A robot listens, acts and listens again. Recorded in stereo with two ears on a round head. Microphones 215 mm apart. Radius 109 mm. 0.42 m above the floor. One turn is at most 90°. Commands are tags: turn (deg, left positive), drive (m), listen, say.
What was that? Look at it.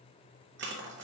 <turn deg="-50"/>
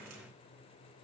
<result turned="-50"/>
<listen/>
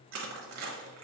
<turn deg="-80"/>
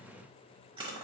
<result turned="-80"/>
<turn deg="-25"/>
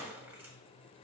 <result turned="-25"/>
<turn deg="-10"/>
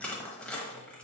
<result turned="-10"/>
<say>Found it: crushing, straight ahead.</say>